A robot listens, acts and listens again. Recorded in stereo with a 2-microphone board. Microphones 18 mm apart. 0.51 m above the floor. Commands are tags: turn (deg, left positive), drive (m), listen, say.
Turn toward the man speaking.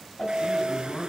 <turn deg="60"/>
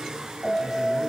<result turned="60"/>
<listen/>
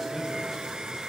<listen/>
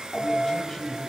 <turn deg="15"/>
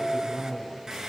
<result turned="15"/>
<say>Facing the man speaking.</say>